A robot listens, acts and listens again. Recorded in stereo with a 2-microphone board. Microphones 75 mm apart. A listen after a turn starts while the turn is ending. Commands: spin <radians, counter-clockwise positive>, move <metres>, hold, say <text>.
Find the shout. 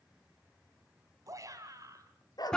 spin -0.79
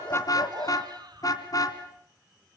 hold
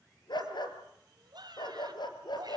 spin -1.48
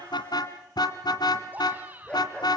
spin -0.44
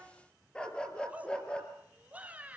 spin -0.35
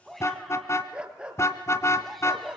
say Found it: a shout, straight ahead, 2 to 4 m away.